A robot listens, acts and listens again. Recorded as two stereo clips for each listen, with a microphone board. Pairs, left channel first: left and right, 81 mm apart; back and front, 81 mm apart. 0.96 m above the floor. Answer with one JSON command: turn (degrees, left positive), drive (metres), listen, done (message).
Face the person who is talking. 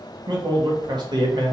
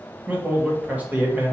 {"turn": -70}
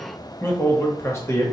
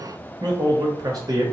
{"turn": 35}
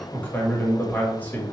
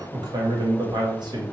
{"turn": 20}
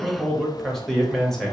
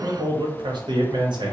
{"done": "Found it: a man speaking, straight ahead, 1 to 2 m away."}